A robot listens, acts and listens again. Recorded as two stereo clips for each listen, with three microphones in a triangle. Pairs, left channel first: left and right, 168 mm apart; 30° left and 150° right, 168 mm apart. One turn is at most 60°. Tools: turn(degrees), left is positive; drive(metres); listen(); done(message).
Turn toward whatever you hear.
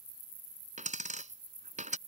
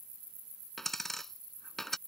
turn(degrees=-60)
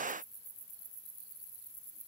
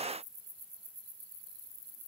done("Facing where the dropped coin came from. I can't hear it now.")